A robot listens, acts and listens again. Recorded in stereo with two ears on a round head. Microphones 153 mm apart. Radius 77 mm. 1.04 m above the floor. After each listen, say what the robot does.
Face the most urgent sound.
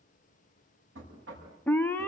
Turn 30° left.
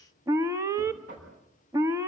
Turn 15° right.
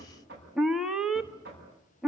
Facing the alarm, 1 to 2 m away.